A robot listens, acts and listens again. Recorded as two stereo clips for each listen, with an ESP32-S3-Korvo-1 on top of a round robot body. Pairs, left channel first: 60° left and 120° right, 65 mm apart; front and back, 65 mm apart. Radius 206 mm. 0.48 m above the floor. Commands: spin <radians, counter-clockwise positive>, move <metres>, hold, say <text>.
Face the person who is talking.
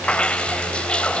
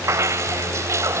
hold
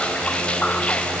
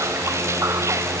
hold
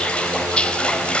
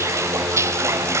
say I can't make out anyone speaking to turn to.